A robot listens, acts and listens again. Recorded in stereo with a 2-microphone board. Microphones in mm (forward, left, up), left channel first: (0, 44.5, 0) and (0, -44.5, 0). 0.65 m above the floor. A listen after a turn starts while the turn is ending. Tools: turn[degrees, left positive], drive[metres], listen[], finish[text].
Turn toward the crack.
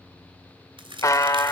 Thought: The crack: about 70° right or 110° right.
Action: turn[-70]
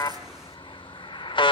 Action: listen[]
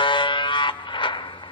Action: finish[I heard a crack, but can't make it out now. It was about straight ahead or 40° right.]